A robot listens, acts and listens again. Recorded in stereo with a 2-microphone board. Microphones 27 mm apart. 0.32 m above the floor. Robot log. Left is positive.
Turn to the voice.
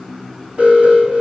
cmd idle
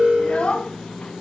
note: The child speaking: about 40° left or 140° left.
cmd yaw +40
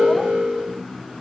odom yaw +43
cmd idle
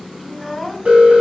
end: Facing the child speaking.